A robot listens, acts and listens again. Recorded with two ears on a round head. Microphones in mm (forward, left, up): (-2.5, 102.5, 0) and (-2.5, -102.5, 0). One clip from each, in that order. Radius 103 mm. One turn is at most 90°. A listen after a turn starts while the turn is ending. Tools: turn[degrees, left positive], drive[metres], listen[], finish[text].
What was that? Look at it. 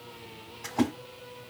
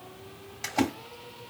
Action: turn[-90]
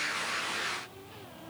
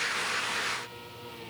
Action: finish[Facing where the splash came from. I can't hear it now.]